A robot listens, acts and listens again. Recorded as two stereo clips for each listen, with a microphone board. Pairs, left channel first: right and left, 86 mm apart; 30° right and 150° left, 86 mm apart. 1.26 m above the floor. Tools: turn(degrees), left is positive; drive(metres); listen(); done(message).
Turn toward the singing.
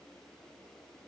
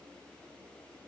listen()
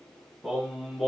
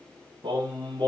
turn(degrees=180)
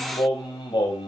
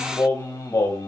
turn(degrees=-80)
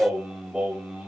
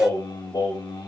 turn(degrees=10)
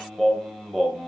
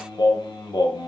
done("Found it: singing, straight ahead, 2 to 4 m away.")